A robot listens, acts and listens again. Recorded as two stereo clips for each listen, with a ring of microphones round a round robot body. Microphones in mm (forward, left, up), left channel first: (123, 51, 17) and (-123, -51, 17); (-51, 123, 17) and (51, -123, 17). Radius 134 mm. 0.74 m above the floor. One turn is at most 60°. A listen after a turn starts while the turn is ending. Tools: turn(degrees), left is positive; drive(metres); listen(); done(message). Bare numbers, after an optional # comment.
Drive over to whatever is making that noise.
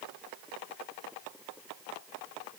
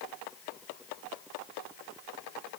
listen()
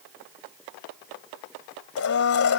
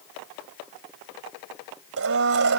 # The blender: 20° right.
turn(-20)
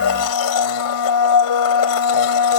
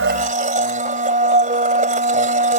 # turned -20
drive(1.0)
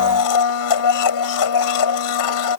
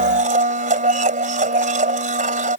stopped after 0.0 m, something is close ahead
done("Blocked. The blender is further on, straight ahead.")